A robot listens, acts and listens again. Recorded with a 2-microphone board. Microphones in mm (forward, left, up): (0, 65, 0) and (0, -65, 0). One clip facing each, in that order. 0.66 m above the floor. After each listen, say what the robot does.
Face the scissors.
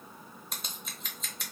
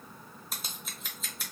Turn 30° left.
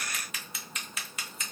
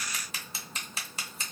Turn 35° right.
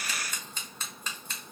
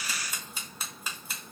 Turn 10° right.
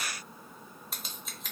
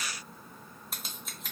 Found it: scissors, straight ahead, under 1 m away.